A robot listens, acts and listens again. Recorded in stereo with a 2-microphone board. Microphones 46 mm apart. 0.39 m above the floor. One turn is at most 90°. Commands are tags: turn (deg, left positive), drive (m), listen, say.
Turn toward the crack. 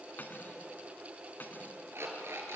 <listen/>
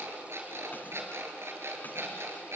<listen/>
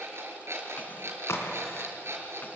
<turn deg="70"/>
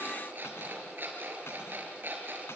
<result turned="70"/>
<listen/>
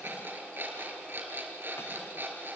<say>I heard a crack, but can't make it out now. It was about straight ahead or 40° left.</say>